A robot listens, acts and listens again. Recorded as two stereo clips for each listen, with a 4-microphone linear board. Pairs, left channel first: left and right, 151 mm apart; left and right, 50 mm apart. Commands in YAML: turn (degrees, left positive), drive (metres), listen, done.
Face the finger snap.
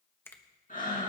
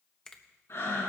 turn: 30
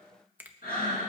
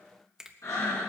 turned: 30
turn: -15
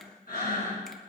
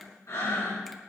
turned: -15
listen: true
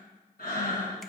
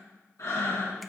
listen: true
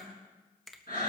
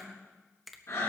done: "Facing the finger snap, 1 to 2 m away."